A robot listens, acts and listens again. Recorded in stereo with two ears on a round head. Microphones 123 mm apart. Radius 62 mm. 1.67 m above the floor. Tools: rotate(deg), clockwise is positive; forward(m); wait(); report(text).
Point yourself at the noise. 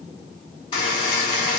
rotate(-40)
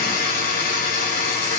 rotate(-100)
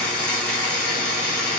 report("Found it: a buzzer, straight ahead.")